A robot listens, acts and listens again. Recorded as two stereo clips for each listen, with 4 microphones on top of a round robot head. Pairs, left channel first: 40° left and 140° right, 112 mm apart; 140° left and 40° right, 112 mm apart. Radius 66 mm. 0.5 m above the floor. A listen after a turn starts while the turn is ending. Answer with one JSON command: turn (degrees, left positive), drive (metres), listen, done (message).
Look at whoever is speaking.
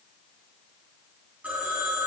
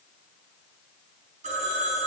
{"listen": true}
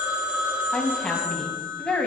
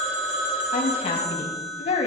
{"turn": 120}
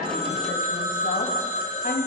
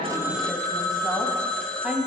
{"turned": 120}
{"turn": 45}
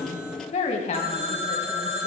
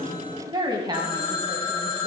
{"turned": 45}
{"turn": 15}
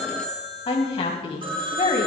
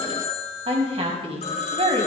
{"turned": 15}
{"done": "Facing the woman speaking, 2 to 4 m away."}